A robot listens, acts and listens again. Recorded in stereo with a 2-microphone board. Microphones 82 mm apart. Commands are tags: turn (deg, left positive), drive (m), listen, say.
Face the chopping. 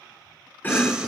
<turn deg="20"/>
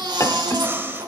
<turn deg="140"/>
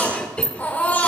<turn deg="15"/>
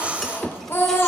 <say>Facing the chopping, under 1 m away.</say>